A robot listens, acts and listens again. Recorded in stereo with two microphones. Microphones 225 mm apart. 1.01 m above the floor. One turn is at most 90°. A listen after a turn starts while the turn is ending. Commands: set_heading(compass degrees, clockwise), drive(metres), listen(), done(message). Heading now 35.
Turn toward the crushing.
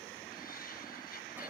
listen()
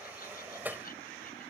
listen()
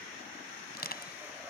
set_heading(350)
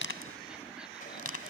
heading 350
set_heading(260)
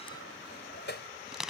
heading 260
done("Facing the crushing.")